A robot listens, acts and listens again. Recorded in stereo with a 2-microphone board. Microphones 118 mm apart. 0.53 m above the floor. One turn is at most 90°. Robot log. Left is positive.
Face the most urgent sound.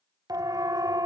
note: The siren: about 35° right or 145° right.
cmd yaw -35
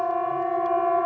end: Found it: a siren, straight ahead.